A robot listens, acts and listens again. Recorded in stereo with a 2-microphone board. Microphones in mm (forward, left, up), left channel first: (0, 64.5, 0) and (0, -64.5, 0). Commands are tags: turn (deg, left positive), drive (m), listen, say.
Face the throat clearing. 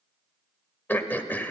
<turn deg="30"/>
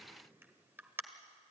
<turn deg="-15"/>
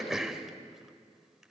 <say>Facing the throat clearing.</say>